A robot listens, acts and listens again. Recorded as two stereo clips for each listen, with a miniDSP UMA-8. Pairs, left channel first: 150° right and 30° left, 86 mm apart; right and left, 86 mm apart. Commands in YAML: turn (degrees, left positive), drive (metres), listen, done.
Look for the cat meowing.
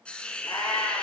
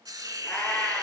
turn: -160
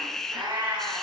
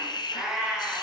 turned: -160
turn: 10
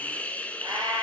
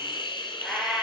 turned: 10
done: "Found it: a cat meowing, straight ahead."